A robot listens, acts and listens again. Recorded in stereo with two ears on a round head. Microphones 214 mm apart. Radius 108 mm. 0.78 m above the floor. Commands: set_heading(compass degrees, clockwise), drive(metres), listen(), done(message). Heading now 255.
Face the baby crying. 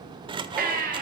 set_heading(290)
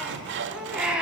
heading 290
done("Found it: a baby crying, straight ahead, 2 to 4 m away.")